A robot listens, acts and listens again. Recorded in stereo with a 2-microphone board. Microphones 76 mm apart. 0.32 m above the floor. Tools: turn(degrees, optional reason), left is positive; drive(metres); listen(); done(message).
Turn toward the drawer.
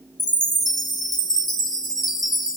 listen()
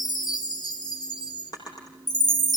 turn(degrees=55, reason="The drawer: about 55° left or 125° left.")
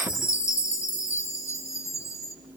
listen()
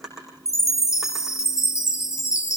done("Found it: a drawer, straight ahead, over 4 m away.")